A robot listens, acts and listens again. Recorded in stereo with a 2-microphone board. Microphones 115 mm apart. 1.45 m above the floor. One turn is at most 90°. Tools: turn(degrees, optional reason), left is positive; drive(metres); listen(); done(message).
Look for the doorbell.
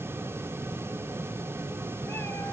listen()
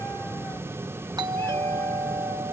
turn(degrees=-40, reason="The doorbell: about 40° right or 140° right.")
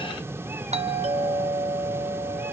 turn(degrees=-90, reason="So it is at 100° right.")
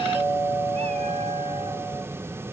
turn(degrees=-15, reason="The doorbell is now 15° right.")
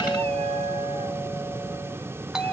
done("Facing the doorbell.")